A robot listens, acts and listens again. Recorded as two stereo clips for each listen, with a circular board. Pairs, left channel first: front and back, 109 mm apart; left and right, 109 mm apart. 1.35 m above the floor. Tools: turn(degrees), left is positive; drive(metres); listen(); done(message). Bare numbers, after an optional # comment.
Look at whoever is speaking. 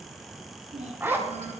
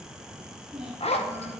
# The child speaking: 175° right.
turn(-175)
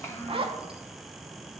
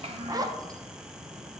# The child speaking is now 70° right.
turn(-70)
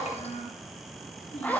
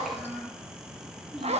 done("Facing the child speaking, 1 to 2 m away.")